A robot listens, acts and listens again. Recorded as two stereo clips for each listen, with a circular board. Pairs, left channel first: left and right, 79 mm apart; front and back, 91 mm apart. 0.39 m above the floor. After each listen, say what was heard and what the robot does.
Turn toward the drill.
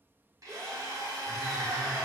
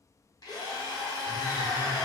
The drill: 45° right. Turn 45° right.
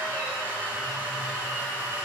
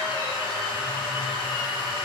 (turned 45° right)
The drill is now 20° right. Turn 20° right.
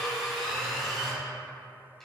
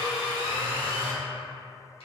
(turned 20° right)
Facing the drill.